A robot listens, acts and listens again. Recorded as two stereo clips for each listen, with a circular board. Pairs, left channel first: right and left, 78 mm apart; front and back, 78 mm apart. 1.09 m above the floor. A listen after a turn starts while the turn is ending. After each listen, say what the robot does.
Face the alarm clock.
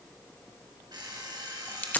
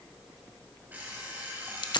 Turn 115° left.
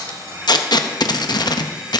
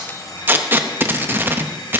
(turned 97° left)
Turn 15° left.
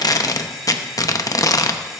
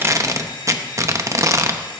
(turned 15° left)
Found it: an alarm clock, straight ahead.